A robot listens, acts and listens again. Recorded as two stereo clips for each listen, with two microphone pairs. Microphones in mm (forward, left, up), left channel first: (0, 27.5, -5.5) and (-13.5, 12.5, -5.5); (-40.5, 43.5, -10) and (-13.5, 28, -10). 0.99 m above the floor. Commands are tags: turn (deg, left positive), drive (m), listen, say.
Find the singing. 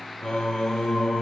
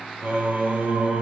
<say>Facing the singing, 2 to 4 m away.</say>